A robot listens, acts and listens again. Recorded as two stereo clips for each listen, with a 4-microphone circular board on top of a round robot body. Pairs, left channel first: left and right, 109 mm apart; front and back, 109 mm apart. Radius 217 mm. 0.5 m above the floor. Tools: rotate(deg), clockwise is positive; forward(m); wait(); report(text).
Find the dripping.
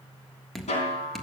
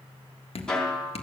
report("Facing the dripping.")